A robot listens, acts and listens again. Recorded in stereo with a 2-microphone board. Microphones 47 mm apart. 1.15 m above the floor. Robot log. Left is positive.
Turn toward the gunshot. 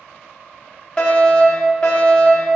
cmd idle
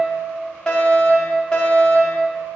cmd idle
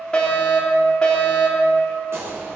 cmd yaw -90
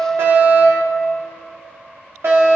end: Facing where the gunshot came from. I can't hear it now.